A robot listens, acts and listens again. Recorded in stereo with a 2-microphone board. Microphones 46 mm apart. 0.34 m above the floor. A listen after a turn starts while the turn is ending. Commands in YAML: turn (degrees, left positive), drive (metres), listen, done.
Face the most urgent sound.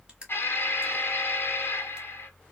turn: 50
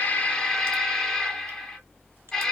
turn: 10
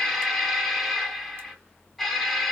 done: "Facing the alarm, 1 to 2 m away."